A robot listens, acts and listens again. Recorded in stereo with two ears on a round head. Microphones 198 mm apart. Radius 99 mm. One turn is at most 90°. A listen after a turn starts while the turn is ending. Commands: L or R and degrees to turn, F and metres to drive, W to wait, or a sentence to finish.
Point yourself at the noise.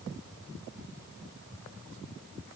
W
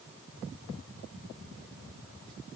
W
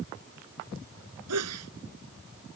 R90
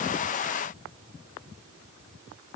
Facing where the sneeze came from. I can't hear it now.